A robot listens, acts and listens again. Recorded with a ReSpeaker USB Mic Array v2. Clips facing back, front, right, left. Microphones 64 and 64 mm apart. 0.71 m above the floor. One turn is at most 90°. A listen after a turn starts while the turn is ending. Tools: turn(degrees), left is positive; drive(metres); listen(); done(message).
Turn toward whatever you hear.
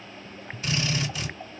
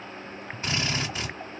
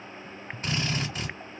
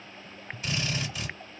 turn(degrees=-50)
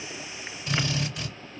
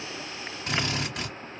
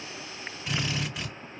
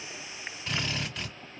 turn(degrees=-10)
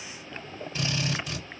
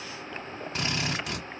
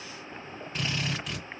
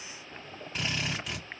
done("Facing the drill.")